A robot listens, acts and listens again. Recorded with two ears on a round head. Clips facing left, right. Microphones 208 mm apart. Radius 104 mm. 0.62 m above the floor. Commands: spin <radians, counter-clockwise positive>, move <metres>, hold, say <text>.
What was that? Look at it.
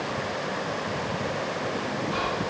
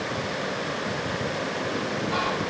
spin -1.57
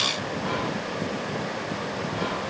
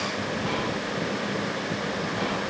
say Facing the whispering.